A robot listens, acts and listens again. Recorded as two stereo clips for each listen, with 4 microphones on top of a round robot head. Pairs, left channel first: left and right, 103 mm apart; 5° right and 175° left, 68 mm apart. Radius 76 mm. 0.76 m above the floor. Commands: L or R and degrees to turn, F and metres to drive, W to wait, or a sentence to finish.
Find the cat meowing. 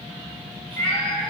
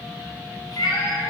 L10
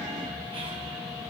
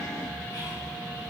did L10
W
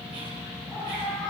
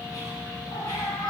Found it: a cat meowing, straight ahead.